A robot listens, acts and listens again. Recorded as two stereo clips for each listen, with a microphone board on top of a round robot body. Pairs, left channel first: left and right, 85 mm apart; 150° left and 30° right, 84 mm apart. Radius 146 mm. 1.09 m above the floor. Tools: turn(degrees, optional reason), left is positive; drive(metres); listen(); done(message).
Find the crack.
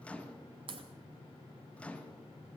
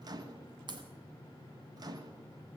turn(degrees=-65, reason="The crack: 65° right.")
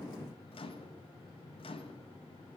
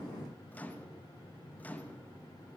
done("Facing where the crack came from. I can't hear it now.")